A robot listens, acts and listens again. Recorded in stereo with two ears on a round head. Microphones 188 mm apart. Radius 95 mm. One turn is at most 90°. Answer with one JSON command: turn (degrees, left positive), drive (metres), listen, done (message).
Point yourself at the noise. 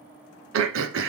{"turn": -70}
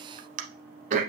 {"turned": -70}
{"turn": -40}
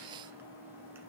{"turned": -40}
{"listen": true}
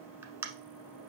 {"turn": -10}
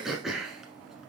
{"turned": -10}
{"done": "Found it: throat clearing, straight ahead."}